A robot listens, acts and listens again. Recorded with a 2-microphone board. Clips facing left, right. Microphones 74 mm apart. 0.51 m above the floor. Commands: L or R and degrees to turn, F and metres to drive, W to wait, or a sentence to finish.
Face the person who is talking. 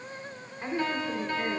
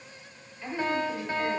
L45
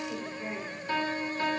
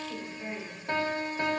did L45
L15
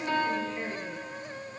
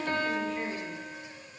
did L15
W
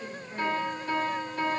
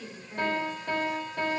Found it: a woman speaking, straight ahead.